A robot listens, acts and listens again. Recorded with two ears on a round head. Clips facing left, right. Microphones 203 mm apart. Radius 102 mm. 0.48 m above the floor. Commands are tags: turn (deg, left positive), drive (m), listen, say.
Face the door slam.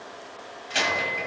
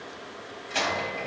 <turn deg="30"/>
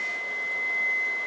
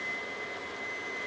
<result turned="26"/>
<listen/>
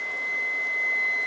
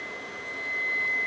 <say>I heard a door slam, but can't make it out now. It was about 15° right or 140° left.</say>